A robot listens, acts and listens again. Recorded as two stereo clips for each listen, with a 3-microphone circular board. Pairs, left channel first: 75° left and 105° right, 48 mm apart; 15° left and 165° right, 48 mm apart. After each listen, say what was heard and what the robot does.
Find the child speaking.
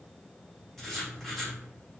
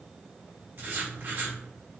Keep listening.
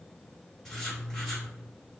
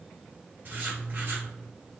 Keep listening.
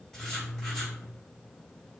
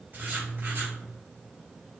I can't make out a child speaking, only writing.